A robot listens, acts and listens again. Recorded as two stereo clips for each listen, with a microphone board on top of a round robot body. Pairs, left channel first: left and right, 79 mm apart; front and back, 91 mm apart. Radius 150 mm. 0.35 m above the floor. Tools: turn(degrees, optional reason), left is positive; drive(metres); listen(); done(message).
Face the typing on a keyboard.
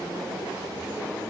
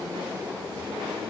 listen()
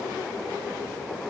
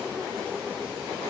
listen()
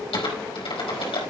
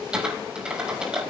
turn(degrees=100, reason="The typing on a keyboard: 100° left.")
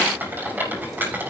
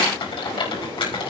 turn(degrees=-25, reason="The typing on a keyboard is now 25° right.")
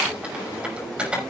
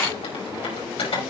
turn(degrees=-15, reason="The typing on a keyboard is now 15° right.")
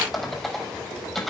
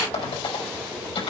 done("Found it: typing on a keyboard, straight ahead, over 4 m away.")